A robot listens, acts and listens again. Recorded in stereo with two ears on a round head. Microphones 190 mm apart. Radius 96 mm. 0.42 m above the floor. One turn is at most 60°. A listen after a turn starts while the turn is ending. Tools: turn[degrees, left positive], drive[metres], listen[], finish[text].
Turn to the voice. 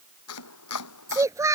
Action: turn[-30]
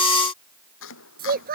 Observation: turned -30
Thought: So it is at 135° right.
Action: turn[-60]
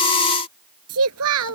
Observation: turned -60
Thought: The child speaking is now 90° right.
Action: turn[-60]
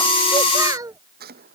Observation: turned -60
Thought: The child speaking is now 15° right.
Action: turn[-15]
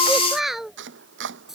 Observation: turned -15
Action: finish[Found it: a child speaking, straight ahead.]